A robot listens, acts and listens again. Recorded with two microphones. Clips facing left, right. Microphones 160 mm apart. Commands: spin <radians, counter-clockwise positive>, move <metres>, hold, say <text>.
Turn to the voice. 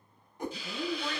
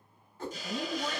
spin -0.44
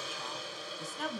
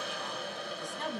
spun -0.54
say Found it: a woman speaking, straight ahead, 2 to 4 m away.